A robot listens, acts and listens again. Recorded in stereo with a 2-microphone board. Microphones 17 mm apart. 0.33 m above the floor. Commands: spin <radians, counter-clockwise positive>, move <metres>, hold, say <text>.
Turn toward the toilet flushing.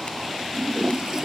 spin -0.52
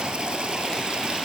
hold
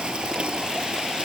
spin -2.09
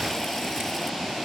hold
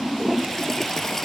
spin 0.35
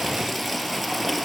say Found it: a toilet flushing, straight ahead.